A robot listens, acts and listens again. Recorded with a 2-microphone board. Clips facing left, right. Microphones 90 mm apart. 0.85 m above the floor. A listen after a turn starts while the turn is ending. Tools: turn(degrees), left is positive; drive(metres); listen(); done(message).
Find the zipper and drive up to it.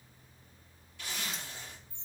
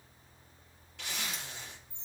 turn(degrees=-75)
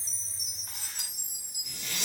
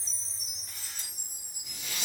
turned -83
drive(metres=1.0)
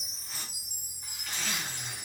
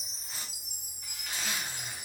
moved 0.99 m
turn(degrees=-10)
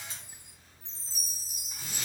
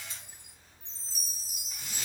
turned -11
listen()
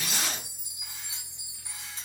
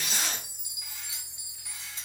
drive(metres=1.0)
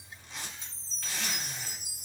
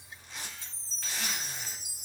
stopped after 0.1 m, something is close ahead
done("I am next to the zipper.")